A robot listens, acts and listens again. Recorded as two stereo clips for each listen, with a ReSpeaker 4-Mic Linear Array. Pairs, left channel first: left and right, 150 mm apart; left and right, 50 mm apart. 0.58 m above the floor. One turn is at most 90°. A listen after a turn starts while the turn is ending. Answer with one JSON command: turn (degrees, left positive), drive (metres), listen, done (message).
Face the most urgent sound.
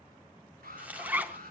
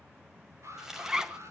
{"turn": -75}
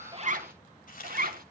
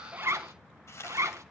{"listen": true}
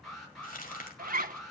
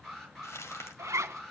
{"done": "Facing the alarm."}